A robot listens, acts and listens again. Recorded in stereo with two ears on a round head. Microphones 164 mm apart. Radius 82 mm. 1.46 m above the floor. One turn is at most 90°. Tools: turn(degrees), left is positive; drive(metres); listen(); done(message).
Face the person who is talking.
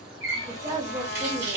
turn(degrees=-20)
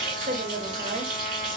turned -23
turn(degrees=-90)
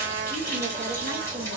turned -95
turn(degrees=-40)
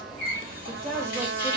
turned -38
done("Found it: a woman speaking, straight ahead, 1 to 2 m away.")